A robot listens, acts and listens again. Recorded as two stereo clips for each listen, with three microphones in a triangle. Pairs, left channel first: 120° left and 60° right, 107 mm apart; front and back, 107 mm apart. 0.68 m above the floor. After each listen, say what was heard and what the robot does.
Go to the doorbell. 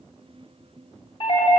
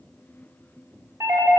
The doorbell: 120° left. Turn 120° left.
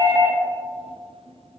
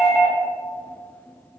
Drive 1.0 m forward.
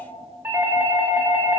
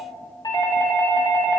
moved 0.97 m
Drive 1.0 m forward.
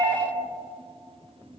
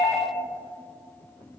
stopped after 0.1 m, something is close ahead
The doorbell is now 10° right. Turn 10° right.
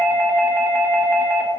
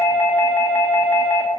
Arrived at the doorbell, straight ahead.